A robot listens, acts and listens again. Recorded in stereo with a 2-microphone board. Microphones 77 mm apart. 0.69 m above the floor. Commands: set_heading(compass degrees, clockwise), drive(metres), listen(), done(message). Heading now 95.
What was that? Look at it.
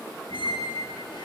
set_heading(30)
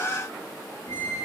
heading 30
set_heading(340)
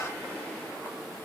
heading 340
listen()
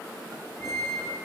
set_heading(320)
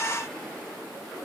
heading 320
listen()
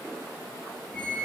done("Found it: a squeak, straight ahead.")